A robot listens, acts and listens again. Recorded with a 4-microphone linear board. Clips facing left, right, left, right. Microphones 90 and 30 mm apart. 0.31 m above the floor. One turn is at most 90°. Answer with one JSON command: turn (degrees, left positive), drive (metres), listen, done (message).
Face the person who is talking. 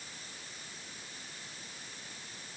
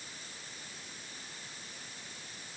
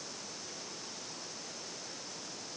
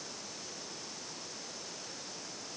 {"listen": true}
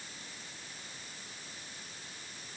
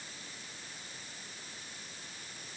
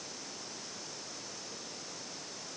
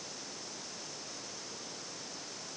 {"listen": true}
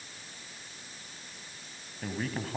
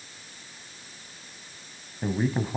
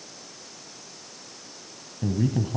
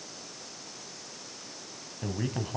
{"turn": -30}
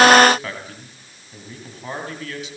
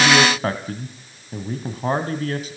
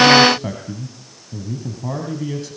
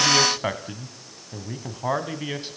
{"turn": -90}
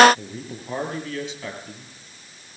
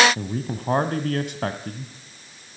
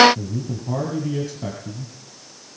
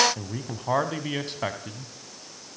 {"turn": -55}
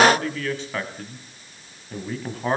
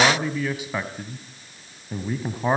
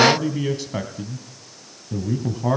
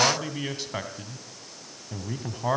{"turn": -10}
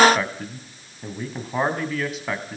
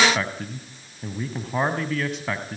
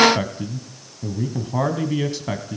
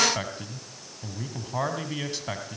{"done": "Facing the man speaking."}